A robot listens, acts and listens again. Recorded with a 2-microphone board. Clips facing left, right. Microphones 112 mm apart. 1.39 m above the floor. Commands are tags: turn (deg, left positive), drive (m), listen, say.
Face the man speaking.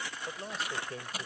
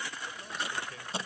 <turn deg="35"/>
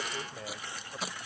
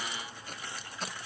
<listen/>
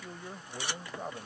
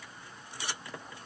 <turn deg="120"/>
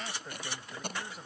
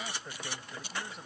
<say>Facing the man speaking.</say>